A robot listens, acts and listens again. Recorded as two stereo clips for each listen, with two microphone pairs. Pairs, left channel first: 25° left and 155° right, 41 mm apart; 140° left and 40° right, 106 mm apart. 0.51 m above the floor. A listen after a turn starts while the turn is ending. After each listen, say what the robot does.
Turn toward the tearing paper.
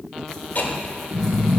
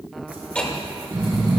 Keep listening.
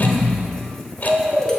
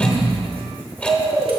Keep listening.
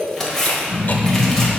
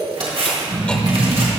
Turn 55° right.
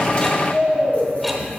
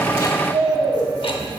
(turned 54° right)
Keep listening.
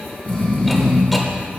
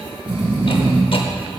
Keep listening.
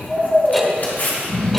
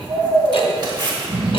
Found it: tearing paper, straight ahead.